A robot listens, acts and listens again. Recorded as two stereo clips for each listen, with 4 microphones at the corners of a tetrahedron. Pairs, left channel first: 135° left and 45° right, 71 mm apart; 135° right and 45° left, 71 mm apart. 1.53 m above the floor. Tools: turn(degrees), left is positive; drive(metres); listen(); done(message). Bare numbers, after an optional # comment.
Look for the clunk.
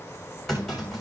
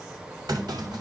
# The clunk: 45° left.
turn(45)
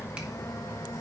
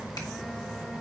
done("Facing where the clunk came from. I can't hear it now.")